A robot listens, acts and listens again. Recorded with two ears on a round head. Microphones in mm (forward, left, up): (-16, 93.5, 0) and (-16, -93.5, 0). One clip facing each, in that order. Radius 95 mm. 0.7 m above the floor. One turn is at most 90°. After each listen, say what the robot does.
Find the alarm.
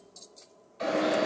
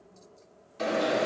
Turn 55° right.
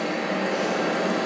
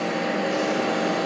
Turn 10° right.
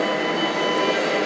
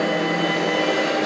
Found it: an alarm, straight ahead.